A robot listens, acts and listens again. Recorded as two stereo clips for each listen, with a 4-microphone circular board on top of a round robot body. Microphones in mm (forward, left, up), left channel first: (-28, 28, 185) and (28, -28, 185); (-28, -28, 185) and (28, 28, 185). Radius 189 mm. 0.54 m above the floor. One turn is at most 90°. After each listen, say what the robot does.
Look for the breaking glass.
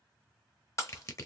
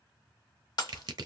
Turn 90° right.
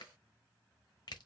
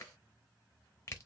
Turn 80° right.
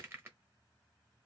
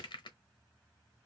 Facing where the breaking glass came from. I can't hear it now.